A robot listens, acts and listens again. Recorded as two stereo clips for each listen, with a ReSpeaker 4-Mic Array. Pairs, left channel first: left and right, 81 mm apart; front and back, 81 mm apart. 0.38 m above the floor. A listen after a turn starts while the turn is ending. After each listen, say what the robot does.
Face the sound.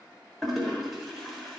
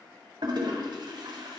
Turn 180° left.
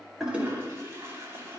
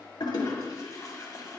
Turn 40° right.
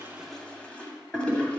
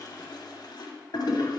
Turn 15° left.
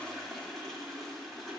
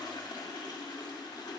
Facing the toilet flushing, 1 to 2 m away.